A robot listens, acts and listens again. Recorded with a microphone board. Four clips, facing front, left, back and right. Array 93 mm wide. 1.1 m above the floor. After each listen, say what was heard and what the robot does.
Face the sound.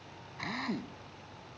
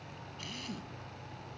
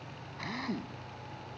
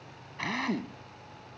The drill: 85° right. Turn 85° right.
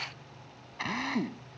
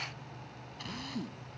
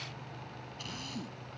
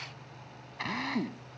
The drill is now 35° right. Turn 35° right.
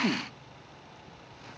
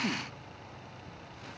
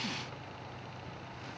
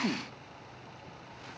The drill is now 15° right. Turn 15° right.
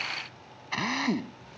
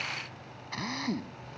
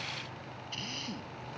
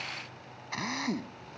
Found it: a drill, straight ahead.